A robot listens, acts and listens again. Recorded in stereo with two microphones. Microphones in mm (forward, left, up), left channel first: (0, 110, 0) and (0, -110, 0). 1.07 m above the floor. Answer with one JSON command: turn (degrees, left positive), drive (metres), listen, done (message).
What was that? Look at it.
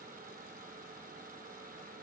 {"listen": true}
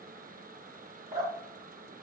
{"turn": -35}
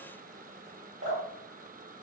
{"turn": -110}
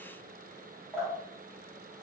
{"done": "Found it: dripping, straight ahead, 2 to 4 m away."}